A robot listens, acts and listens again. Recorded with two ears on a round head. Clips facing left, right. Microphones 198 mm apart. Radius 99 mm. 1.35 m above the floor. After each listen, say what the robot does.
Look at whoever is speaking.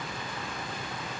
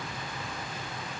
Keep listening.
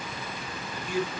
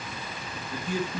Turn 65° right.
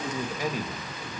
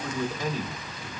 Turn 15° left.
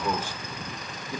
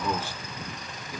Turn 25° left.
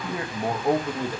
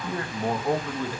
Turn 20° left.
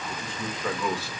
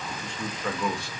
Facing the man speaking.